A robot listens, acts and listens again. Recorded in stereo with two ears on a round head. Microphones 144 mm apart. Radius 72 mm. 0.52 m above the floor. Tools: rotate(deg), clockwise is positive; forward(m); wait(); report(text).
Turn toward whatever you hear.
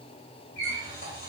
rotate(-65)
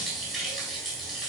report("Facing the running tap, 2 to 4 m away.")